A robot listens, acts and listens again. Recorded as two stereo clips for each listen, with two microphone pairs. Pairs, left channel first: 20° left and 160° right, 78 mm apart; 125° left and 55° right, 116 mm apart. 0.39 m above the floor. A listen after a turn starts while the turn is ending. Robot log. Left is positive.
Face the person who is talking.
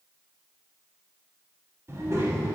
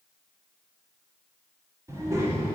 note: The child speaking: 115° right.
cmd yaw -115
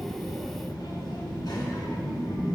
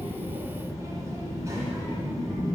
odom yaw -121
note: The child speaking is now 10° left.
cmd yaw +10
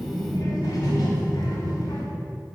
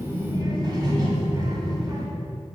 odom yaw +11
end: Found it: a child speaking, straight ahead, 1 to 2 m away.